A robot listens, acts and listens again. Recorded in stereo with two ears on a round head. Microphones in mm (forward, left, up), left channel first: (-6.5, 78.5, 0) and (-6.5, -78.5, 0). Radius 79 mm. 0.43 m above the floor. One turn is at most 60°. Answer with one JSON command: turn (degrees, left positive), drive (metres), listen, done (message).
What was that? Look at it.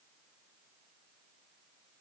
{"listen": true}
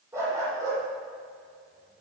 {"turn": -20}
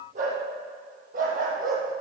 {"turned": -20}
{"turn": -60}
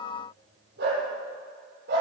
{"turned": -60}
{"turn": -60}
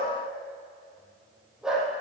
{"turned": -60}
{"done": "Found it: a dog barking, straight ahead, over 4 m away."}